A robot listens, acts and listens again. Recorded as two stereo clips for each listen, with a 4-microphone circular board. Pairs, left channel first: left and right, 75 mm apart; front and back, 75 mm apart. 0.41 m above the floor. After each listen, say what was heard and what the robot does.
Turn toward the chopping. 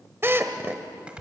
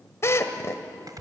The chopping: 165° right. Turn 165° right.
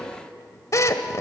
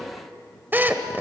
Keep listening.
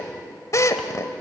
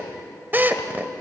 Keep listening.
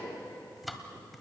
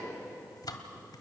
Facing the chopping.